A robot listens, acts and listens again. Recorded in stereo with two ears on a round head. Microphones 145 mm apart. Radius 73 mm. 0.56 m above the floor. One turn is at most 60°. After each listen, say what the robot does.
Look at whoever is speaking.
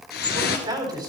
Turn 25° right.
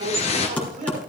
Turn 60° right.
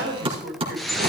Turn 60° right.
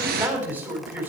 Turn 15° right.
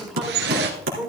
Found it: a man speaking, straight ahead, 2 to 4 m away.